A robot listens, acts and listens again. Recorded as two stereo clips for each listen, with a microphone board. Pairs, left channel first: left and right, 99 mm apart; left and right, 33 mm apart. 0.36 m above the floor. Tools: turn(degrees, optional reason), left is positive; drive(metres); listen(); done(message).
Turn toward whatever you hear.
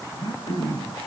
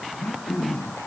turn(degrees=55, reason="The throat clearing: about 55° left or 125° left.")
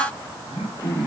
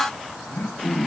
turn(degrees=70, reason="So it is at 70° left.")
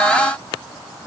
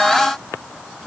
listen()
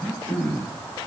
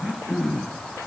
turn(degrees=10, reason="The throat clearing is now 10° left.")
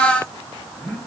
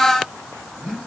done("Found it: throat clearing, straight ahead, over 4 m away.")